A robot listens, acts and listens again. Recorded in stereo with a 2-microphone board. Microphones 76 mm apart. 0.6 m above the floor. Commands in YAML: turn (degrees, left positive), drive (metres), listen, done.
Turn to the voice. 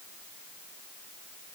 listen: true
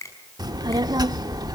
turn: -60
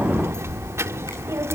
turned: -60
turn: -40
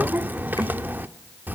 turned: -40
turn: -25
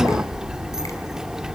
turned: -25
turn: -10
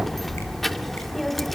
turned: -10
done: "Found it: a child speaking, straight ahead."